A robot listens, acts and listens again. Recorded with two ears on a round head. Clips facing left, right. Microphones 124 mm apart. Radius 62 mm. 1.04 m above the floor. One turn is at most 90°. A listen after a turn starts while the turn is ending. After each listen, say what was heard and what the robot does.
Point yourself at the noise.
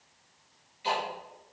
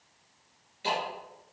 The ticking: about 60° right or 120° right. Turn 60° right.
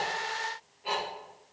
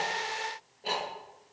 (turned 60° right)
So it is at 55° right. Turn 55° right.
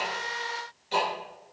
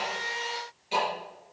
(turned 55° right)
Found it: ticking, straight ahead.